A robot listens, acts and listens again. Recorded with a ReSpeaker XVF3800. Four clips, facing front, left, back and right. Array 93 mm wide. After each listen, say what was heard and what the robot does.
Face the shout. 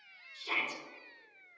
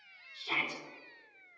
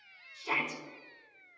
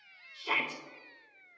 The shout: 115° right. Turn 115° right.
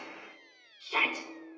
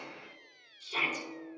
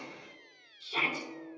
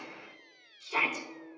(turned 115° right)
The shout is now 30° right. Turn 30° right.
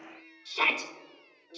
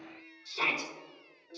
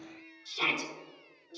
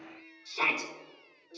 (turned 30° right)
Facing the shout.